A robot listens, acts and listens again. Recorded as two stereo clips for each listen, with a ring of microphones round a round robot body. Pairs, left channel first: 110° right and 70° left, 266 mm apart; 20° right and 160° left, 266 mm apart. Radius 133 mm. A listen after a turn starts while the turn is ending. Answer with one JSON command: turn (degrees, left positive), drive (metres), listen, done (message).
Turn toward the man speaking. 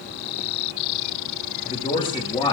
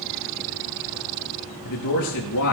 {"turn": -40}
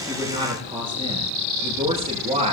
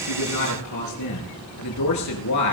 {"done": "Facing the man speaking."}